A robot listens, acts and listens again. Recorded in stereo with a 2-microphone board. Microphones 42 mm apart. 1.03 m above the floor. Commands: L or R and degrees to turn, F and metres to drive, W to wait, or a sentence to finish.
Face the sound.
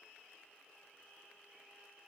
W
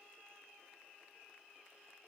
W
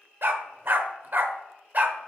R40
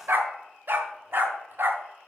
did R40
R125
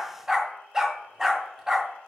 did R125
R15
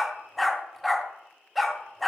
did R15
Facing the dog barking, 1 to 2 m away.